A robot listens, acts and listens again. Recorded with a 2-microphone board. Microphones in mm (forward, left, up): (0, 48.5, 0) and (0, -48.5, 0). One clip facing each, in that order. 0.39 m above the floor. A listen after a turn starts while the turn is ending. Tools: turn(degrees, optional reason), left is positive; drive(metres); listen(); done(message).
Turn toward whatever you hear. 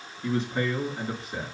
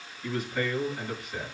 turn(degrees=30, reason="The man speaking: about 30° left or 150° left.")
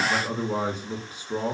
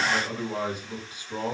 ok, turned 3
turn(degrees=35, reason="The man speaking: about 35° left or 145° left.")
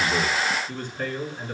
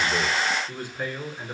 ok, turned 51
turn(degrees=-10, reason="So it is at 10° right.")
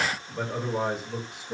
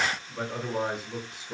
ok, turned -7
done("Facing the man speaking, over 4 m away.")